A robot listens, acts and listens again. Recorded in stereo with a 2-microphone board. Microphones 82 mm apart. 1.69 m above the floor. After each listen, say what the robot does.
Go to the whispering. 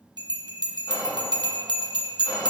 Turn 55° left.
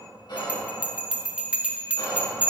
Turn 65° left.
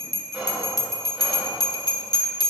Turn 15° right.
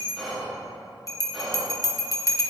Drive 1.0 m forward.
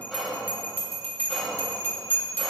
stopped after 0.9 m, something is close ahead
Arrived at the whispering, straight ahead.